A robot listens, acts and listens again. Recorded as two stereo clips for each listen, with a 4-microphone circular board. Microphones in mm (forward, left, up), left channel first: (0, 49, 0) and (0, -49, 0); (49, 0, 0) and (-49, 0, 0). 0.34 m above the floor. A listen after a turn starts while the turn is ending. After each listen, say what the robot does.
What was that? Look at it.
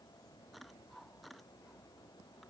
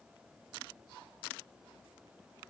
Keep listening.
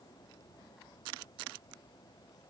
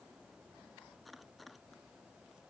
Keep listening.
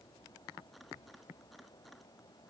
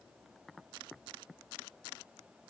I can't make out anything to turn to.